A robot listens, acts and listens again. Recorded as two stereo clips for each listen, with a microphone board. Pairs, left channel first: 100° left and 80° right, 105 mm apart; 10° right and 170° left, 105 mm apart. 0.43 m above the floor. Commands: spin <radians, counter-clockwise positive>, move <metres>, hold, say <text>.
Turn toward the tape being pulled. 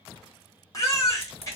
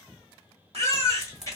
spin 1.48
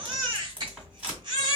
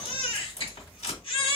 say Facing the tape being pulled, 1 to 2 m away.